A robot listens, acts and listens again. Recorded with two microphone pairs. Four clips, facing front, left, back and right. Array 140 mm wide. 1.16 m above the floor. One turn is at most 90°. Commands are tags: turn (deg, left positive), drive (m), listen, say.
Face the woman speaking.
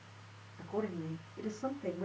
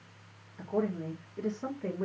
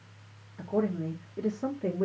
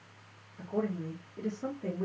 <turn deg="-90"/>
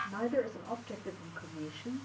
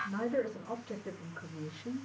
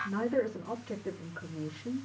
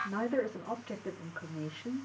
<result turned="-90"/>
<turn deg="-85"/>
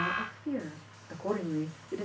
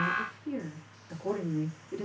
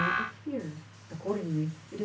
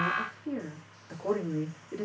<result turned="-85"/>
<turn deg="-35"/>
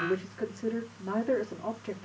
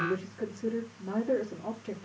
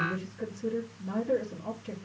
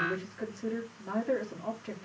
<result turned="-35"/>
<turn deg="-10"/>
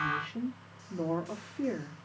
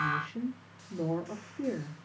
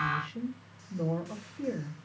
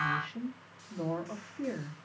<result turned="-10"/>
<say>Facing the woman speaking.</say>